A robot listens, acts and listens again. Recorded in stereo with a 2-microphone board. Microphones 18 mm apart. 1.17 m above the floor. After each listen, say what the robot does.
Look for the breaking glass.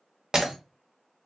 Turn 45° right.
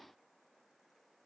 Keep listening.
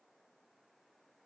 I heard breaking glass, but can't make it out now. It was about straight ahead or 90° right.